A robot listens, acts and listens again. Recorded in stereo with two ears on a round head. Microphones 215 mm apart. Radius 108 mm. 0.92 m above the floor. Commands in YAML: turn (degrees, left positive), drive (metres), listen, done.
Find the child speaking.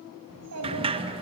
turn: -70
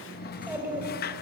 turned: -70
turn: -10
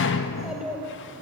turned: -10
done: "Found it: a child speaking, straight ahead, 2 to 4 m away."